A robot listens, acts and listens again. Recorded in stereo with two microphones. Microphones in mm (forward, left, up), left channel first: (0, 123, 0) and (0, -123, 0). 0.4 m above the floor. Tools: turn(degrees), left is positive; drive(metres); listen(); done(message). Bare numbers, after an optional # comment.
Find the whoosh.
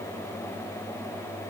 listen()
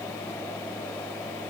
listen()
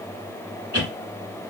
# The whoosh: about 65° left or 115° left.
turn(65)
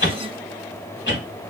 # So it is at 45° left.
turn(45)
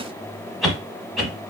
done("Facing the whoosh, under 1 m away.")